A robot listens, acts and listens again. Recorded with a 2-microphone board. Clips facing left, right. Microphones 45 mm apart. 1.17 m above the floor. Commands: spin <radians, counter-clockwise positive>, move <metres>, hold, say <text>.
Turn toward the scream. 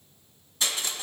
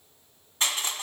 hold
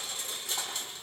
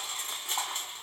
hold
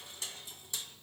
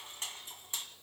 say I can't make out a scream to turn to.